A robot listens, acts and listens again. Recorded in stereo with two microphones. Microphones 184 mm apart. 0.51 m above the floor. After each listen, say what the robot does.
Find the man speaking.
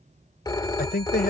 Turn 60° left.
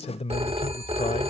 Turn 40° left.
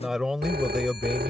Found it: a man speaking, straight ahead.